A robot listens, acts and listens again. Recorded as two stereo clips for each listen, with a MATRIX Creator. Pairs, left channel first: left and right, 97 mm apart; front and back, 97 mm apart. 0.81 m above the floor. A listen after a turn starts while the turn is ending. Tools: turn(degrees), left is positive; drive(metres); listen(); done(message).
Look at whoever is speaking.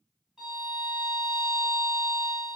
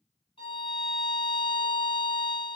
listen()
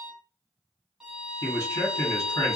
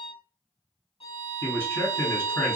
turn(degrees=60)
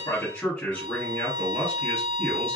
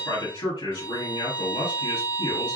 turn(degrees=15)
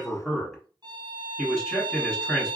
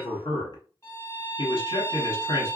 done("Facing the man speaking, 1 to 2 m away.")